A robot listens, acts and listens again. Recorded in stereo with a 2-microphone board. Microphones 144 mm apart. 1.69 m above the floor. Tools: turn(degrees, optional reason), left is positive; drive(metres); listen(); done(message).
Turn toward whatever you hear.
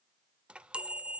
turn(degrees=-30)
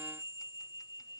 turn(degrees=25, reason="So it is at 25° left.")
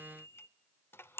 turn(degrees=15, reason="The chime is now 15° left.")
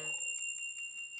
done("Facing the chime, under 1 m away.")